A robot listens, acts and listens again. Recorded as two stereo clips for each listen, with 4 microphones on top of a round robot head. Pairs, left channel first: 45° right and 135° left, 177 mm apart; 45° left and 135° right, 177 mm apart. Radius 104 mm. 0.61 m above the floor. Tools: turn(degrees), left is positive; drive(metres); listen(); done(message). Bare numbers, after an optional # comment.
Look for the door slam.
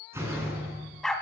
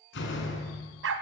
# The door slam: 55° left.
turn(55)
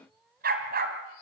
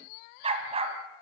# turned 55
done("I heard a door slam from this way, but can't make it out now.")